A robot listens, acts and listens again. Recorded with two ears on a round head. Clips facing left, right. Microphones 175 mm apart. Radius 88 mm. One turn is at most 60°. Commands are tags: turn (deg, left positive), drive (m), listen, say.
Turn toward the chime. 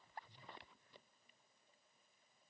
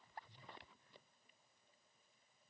<listen/>
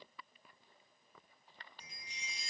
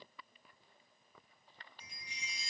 <turn deg="25"/>
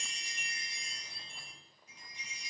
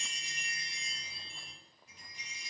<say>Found it: a chime, straight ahead, 1 to 2 m away.</say>